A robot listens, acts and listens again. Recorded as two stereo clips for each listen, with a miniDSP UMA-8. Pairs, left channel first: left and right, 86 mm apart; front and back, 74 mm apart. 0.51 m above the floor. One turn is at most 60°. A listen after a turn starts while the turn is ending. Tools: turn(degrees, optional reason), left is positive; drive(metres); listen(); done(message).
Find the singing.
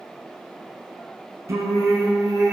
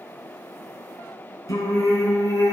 turn(degrees=-45, reason="The singing: 45° right.")
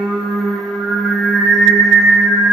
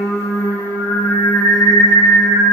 done("Found it: singing, straight ahead.")